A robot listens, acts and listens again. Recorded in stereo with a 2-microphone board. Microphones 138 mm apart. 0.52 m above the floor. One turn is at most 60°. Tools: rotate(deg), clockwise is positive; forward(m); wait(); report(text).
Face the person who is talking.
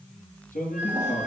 rotate(-60)
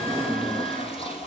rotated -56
rotate(-35)
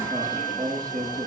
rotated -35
rotate(-10)
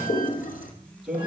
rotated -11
report("Found it: a man speaking, straight ahead, over 4 m away.")